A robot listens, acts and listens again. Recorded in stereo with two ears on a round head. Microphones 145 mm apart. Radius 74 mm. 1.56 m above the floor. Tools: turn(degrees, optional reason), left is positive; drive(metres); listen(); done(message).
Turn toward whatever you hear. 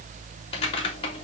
turn(degrees=35, reason="The typing on a keyboard: about 35° left or 145° left.")
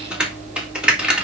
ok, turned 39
done("Found it: typing on a keyboard, straight ahead.")